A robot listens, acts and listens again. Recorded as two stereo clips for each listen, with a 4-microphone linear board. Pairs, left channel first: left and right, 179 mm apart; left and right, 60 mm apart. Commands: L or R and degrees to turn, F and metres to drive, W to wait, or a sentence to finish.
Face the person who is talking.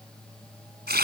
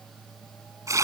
W
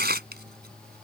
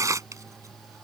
W
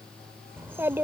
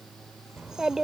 R30
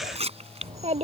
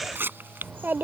R135
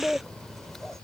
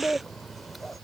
Found it: a child speaking, straight ahead.